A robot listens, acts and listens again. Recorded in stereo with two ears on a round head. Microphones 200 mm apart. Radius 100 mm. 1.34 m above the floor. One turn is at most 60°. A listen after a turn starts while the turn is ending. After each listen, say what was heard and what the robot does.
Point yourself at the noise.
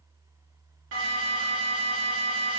The alarm: about 65° right or 115° right. Turn 60° right.
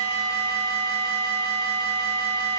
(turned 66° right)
So it is at 50° right. Turn 50° right.
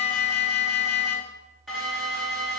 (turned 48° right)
Facing the alarm, 2 to 4 m away.